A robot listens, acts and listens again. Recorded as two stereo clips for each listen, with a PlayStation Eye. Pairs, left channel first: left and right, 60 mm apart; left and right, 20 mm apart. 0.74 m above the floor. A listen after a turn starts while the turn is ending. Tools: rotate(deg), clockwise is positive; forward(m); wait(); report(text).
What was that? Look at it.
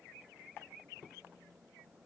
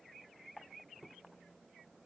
wait()
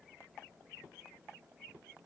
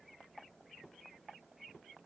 wait()
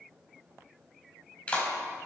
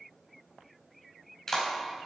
rotate(-20)
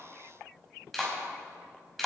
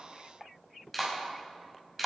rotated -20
report("Facing the clap, over 4 m away.")